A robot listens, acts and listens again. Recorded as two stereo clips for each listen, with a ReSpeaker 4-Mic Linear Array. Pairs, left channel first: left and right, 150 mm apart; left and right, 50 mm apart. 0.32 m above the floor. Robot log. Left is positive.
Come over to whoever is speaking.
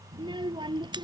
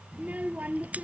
note: The child speaking: about 30° right or 150° right.
cmd yaw -30
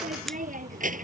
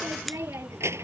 note: So it is at 115° right.
cmd yaw -115
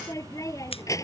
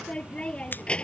note: The child speaking is now 20° left.
cmd yaw +20
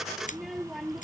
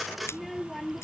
cmd fwd 1.0
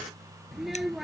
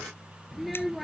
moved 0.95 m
cmd fwd 1.0
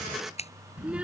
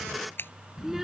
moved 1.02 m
note: The child speaking is now 10° right.
cmd yaw -10
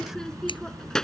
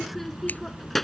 cmd fwd 1.0
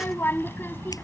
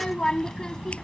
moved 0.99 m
note: The child speaking is now 15° left.
cmd yaw +15
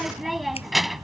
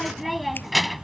cmd fwd 1.0
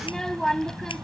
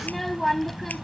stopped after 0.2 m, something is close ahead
end: Arrived at the child speaking, straight ahead.